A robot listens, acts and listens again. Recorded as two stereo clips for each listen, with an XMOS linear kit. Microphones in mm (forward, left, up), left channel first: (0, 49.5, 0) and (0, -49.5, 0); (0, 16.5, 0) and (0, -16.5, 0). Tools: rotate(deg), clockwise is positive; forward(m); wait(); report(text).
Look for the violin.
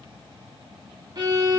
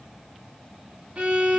rotate(45)
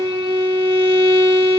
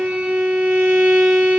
rotate(90)
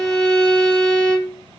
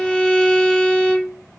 rotate(-15)
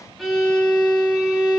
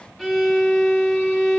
report("Found it: a violin, straight ahead.")